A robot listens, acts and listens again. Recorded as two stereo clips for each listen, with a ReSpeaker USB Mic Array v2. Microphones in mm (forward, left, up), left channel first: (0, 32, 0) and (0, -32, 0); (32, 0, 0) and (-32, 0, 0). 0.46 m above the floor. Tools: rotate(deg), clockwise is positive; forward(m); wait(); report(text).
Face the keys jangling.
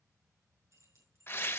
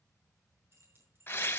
rotate(130)
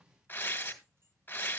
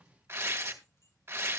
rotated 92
rotate(35)
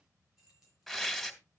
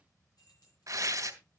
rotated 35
rotate(10)
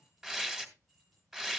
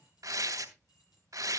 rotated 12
wait()
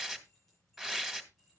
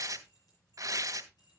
wait()
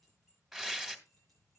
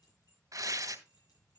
report("Facing the keys jangling, over 4 m away.")